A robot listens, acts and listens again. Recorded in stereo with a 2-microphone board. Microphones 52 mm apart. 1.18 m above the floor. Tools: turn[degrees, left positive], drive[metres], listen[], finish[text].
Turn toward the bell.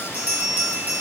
Thought: The bell: about 30° right or 150° right.
Action: turn[-30]
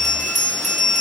Action: finish[Found it: a bell, straight ahead, over 4 m away.]